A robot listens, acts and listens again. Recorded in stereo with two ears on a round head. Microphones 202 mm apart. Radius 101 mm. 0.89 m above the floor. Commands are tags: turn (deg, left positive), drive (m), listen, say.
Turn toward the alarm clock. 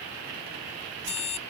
<turn deg="30"/>
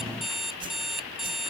<say>Facing the alarm clock.</say>